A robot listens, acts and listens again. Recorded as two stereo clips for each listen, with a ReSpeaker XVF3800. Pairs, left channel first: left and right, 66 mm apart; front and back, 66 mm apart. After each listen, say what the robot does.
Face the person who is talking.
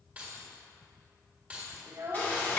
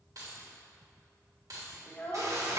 Turn 60° right.
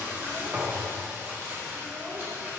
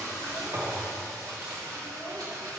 Found it: a child speaking, straight ahead, under 1 m away.